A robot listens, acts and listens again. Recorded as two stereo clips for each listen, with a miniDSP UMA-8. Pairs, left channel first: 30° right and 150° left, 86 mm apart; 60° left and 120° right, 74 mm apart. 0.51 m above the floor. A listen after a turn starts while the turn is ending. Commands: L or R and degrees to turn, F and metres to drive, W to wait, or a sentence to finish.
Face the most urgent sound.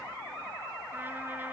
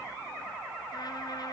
W
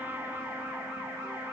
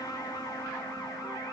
W
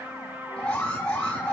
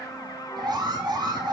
R110
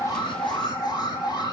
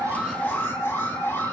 Found it: an alarm, straight ahead.